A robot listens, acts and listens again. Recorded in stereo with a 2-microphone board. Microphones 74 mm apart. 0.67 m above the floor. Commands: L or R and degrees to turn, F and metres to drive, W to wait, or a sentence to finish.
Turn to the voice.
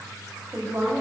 R45
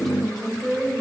Found it: a woman speaking, straight ahead, 2 to 4 m away.